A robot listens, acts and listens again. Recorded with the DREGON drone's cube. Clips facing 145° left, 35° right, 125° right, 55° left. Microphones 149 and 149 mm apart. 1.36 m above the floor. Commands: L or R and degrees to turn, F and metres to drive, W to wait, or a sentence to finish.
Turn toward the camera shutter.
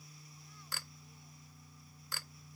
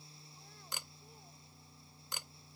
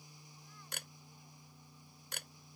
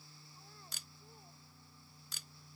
R105
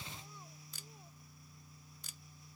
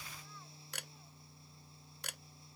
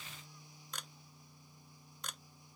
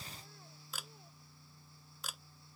R30
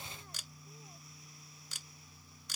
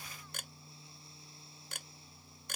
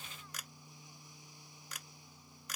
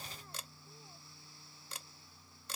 Found it: a camera shutter, straight ahead.